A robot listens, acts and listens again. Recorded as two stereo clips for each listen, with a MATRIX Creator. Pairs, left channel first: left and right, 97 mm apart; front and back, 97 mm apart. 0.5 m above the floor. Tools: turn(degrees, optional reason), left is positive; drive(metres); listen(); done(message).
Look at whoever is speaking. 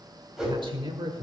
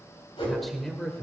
turn(degrees=-75, reason="The man speaking: 75° right.")
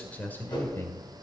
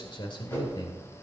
turn(degrees=30, reason="The man speaking is now 30° left.")
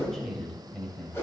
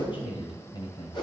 turn(degrees=15, reason="The man speaking is now 15° left.")
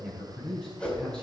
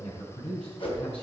turn(degrees=10, reason="The man speaking is now 10° left.")
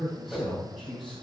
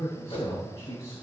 done("Facing the man speaking, 2 to 4 m away.")